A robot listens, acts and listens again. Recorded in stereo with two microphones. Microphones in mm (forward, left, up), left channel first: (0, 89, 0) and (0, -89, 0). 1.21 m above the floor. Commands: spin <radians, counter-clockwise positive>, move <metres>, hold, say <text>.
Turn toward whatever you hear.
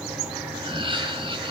spin -0.52
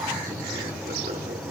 hold
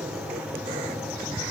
hold
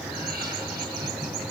say I heard laughter, but can't make it out now. It was about straight ahead or 120° right.